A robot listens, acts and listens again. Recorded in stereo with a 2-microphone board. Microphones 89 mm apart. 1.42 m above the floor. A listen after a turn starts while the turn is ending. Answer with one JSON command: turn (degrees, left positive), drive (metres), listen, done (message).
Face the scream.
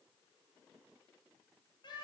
{"listen": true}
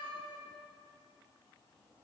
{"listen": true}
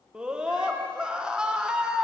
{"turn": -30}
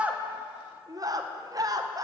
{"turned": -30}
{"turn": -140}
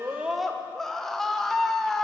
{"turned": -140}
{"done": "Facing the scream, under 1 m away."}